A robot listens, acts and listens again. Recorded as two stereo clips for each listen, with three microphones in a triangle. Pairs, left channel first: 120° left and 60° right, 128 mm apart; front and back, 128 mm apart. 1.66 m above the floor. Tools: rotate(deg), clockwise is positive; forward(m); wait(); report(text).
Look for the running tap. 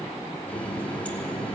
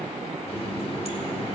rotate(-40)
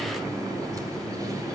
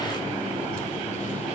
report("Facing the running tap, 2 to 4 m away.")